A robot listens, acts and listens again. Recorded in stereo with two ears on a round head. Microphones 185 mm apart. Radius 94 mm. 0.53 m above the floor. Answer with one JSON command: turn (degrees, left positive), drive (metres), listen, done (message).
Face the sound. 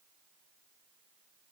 {"listen": true}
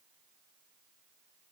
{"listen": true}
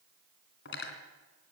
{"turn": 55}
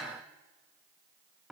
{"done": "Found it: cutlery clinking, straight ahead."}